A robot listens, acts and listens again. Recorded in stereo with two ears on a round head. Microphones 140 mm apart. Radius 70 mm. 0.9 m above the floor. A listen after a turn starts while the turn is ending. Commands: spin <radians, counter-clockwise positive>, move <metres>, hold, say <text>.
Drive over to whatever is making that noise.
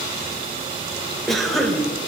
spin 0.52
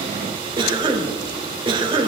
spin -0.61
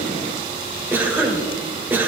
spin -0.26
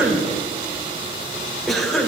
move 1.0
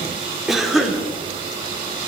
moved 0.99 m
move 1.0
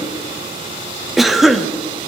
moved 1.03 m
move 1.0
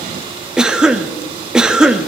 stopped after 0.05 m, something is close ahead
say Arrived at the cough, straight ahead.